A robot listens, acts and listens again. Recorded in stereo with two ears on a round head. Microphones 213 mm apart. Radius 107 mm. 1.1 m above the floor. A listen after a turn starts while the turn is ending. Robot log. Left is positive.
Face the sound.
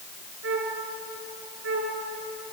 note: The flute: about 55° right or 125° right.
cmd yaw -55
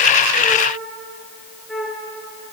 end: Facing the flute.